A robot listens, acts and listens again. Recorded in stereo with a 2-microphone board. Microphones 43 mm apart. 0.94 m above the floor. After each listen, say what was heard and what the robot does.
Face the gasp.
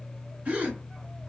The gasp: about 35° right or 145° right. Turn 35° right.
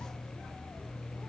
Keep listening.
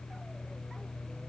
I heard a gasp, but can't make it out now. It was about straight ahead or 110° right.